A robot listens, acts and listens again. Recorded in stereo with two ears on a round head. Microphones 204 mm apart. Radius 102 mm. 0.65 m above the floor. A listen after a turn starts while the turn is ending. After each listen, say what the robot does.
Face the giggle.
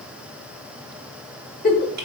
Turn 40° left.
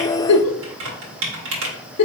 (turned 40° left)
Turn 100° left.
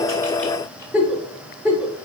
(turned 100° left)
Found it: a giggle, straight ahead, under 1 m away.